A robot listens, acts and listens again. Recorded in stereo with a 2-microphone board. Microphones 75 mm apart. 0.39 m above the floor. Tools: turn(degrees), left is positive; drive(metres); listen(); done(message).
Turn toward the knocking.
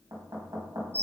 turn(degrees=-55)
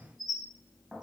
done("Found it: knocking, straight ahead, 2 to 4 m away.")